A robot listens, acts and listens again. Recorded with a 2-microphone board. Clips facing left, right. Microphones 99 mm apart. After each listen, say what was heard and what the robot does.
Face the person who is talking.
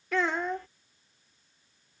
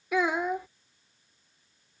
Turn 30° right.
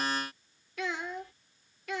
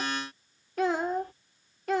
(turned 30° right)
So it is at 140° right. Turn 140° right.
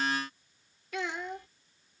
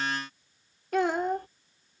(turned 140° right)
The child speaking is now 45° right. Turn 45° right.
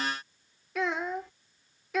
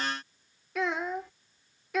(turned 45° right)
Facing the child speaking.